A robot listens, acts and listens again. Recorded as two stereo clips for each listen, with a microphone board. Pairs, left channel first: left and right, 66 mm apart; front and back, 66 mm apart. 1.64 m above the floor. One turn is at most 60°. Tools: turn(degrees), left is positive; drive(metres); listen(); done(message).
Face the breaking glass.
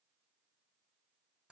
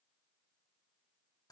listen()
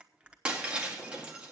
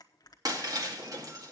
turn(degrees=-60)
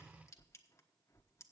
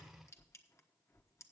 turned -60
turn(degrees=-60)
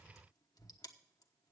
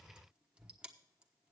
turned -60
turn(degrees=-40)
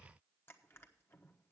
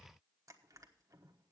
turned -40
done("I heard breaking glass from this way, but can't make it out now.")